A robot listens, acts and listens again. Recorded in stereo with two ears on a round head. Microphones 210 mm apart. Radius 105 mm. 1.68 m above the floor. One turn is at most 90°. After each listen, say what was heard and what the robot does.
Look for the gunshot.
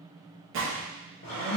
The gunshot: about 50° right or 130° right. Turn 50° right.
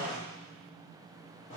Keep listening.
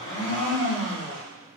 I heard a gunshot, but can't make it out now. It was about straight ahead or 80° right.